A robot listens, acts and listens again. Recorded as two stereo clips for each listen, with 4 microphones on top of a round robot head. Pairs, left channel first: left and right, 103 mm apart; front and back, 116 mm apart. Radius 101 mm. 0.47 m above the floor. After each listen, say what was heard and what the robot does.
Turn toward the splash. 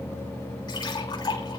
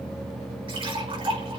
The splash: 135° left. Turn 135° left.
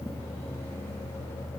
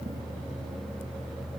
Facing where the splash came from. I can't hear it now.